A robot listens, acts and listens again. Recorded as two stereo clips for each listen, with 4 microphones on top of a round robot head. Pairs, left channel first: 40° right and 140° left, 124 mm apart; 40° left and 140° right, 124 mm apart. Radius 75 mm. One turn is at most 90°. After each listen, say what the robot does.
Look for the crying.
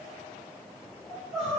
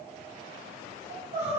Turn 90° right.
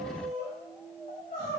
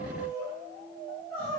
Turn 30° right.
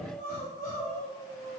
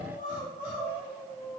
Turn 15° right.
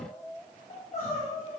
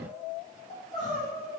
Found it: crying, straight ahead, 1 to 2 m away.